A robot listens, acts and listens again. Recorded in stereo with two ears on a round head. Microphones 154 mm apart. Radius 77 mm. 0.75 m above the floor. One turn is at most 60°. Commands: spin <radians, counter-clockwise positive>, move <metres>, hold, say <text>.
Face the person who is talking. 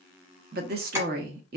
spin -0.96
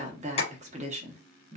spin -0.79
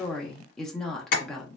say Facing the woman speaking.